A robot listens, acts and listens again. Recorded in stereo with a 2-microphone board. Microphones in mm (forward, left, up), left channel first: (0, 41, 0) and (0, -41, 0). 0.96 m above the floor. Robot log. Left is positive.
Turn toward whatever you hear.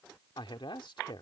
cmd yaw +90
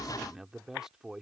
end: Facing the man speaking.